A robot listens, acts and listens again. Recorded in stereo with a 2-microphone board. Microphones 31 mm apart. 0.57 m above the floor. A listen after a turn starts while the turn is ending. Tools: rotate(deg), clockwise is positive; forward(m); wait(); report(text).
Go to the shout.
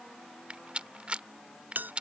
wait()
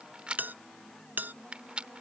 wait()
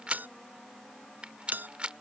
report("I can't make out a shout, only a bell and a rattle.")